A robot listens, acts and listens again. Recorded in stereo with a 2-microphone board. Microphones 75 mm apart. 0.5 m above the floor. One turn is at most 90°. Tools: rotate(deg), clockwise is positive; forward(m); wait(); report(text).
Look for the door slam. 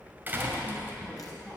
rotate(25)
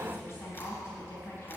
wait()
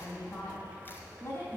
report("I heard a door slam, but can't make it out now. It was about straight ahead or 130° right.")